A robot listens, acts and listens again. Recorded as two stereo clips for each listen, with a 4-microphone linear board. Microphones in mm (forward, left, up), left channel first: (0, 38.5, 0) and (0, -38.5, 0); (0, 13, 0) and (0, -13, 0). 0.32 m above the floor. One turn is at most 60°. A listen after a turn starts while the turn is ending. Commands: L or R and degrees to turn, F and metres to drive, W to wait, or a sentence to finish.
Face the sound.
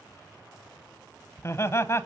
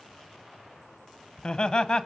L35
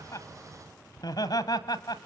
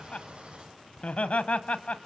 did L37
L60
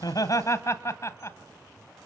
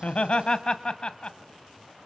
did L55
L45
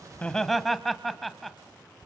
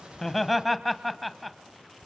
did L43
Found it: laughter, straight ahead, 1 to 2 m away.